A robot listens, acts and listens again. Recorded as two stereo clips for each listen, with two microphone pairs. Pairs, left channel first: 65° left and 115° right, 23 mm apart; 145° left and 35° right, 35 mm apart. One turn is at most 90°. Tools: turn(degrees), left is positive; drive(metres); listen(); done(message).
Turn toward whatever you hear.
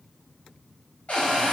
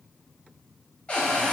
turn(degrees=90)
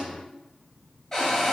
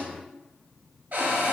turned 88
done("Facing the cupboard door, under 1 m away.")